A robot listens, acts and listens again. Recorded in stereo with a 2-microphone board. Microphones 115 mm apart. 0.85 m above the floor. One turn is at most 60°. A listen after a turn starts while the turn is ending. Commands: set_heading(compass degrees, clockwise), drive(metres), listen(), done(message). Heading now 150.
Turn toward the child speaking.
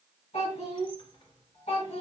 set_heading(90)
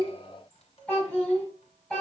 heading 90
set_heading(80)
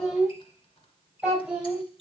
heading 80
set_heading(90)
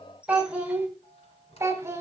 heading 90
set_heading(115)
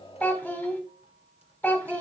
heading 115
set_heading(100)
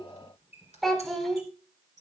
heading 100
done("Facing the child speaking.")